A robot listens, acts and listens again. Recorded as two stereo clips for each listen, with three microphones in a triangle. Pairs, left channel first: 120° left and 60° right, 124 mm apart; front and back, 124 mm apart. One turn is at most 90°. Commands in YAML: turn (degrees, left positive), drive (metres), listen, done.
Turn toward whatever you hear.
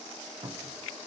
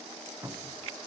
turn: -90
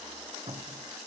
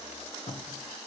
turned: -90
turn: -20
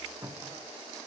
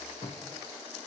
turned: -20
done: "Found it: a cupboard door, straight ahead."